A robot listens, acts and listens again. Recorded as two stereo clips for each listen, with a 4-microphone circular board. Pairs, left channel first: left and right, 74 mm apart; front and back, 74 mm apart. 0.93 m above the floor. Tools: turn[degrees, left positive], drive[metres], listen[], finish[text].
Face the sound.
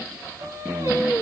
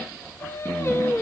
Thought: The singing: 50° right.
Action: turn[-50]
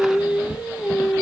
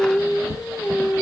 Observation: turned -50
Thought: The singing is now 10° right.
Action: turn[-10]
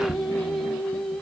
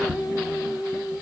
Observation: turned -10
Action: finish[Facing the singing, 2 to 4 m away.]